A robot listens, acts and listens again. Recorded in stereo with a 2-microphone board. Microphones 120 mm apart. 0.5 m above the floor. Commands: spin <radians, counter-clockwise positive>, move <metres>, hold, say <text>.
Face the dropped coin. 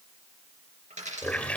spin -1.57
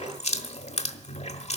say I heard a dropped coin from this way, but can't make it out now.